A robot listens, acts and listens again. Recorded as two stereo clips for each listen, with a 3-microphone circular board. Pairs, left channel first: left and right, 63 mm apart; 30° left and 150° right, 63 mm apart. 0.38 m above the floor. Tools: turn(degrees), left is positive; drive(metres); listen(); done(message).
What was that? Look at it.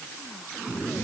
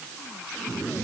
listen()
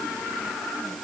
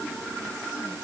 listen()
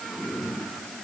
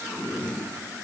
done("I can't make out anything.")